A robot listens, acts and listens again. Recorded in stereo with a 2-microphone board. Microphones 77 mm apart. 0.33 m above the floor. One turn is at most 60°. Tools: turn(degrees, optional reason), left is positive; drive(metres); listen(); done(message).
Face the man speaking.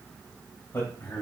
turn(degrees=30, reason="The man speaking: about 30° left or 150° left.")
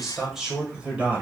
turn(degrees=-25, reason="So it is at 25° right.")
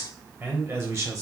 turn(degrees=-40, reason="The man speaking is now 40° right.")
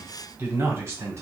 turn(degrees=-40, reason="The man speaking is now 40° right.")
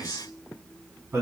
turn(degrees=-35, reason="The man speaking is now 35° right.")
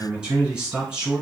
turn(degrees=-15, reason="The man speaking is now 15° right.")
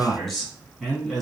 done("Found it: a man speaking, straight ahead, 2 to 4 m away.")